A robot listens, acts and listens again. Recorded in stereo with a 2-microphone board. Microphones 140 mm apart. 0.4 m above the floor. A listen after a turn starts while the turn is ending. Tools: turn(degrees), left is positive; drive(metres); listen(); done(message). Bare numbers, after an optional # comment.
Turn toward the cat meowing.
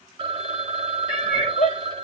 # The cat meowing: about 35° left or 145° left.
turn(35)
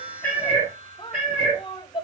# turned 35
done("Facing the cat meowing, over 4 m away.")